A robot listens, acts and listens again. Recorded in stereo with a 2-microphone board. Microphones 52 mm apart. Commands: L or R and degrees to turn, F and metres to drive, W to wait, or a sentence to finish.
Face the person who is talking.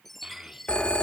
R30
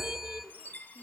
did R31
W
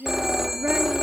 R135
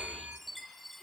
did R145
L10
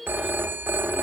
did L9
Facing the child speaking, 1 to 2 m away.